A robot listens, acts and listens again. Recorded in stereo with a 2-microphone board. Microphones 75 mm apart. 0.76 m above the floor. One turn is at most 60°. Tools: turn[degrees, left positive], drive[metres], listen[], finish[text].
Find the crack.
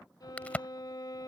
Thought: The crack: about 20° left or 160° left.
Action: turn[20]
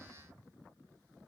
Action: listen[]
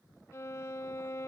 Action: finish[I heard a crack, but can't make it out now. It was about straight ahead or 140° left.]